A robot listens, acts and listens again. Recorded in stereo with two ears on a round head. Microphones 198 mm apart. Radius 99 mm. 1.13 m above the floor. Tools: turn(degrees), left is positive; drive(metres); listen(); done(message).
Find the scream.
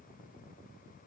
listen()
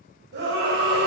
turn(degrees=-50)
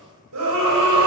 turn(degrees=-80)
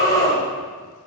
turn(degrees=15)
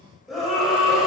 done("Facing the scream, over 4 m away.")